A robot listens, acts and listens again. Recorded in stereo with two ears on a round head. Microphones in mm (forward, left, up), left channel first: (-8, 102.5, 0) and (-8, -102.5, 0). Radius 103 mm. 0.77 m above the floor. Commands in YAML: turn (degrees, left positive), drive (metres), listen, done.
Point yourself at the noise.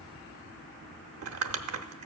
turn: -70
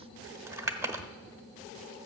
turn: -15
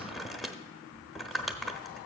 done: "Found it: crumpling, straight ahead, under 1 m away."